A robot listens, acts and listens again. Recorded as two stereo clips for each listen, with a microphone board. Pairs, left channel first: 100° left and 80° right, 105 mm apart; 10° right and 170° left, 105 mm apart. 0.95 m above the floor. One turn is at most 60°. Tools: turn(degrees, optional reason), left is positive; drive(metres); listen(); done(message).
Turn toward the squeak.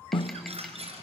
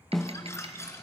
turn(degrees=-60, reason="The squeak: 75° right.")
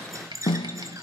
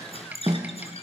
turn(degrees=-20, reason="The squeak is now 20° right.")
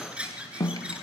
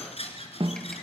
done("Facing the squeak, 2 to 4 m away.")